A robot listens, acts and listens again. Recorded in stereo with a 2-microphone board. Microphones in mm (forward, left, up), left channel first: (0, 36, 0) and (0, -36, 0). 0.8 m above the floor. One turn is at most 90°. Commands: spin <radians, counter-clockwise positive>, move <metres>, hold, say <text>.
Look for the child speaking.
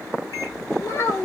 spin 0.79
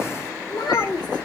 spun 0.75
spin 1.57
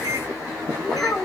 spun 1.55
spin 0.17
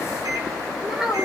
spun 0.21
say Facing the child speaking.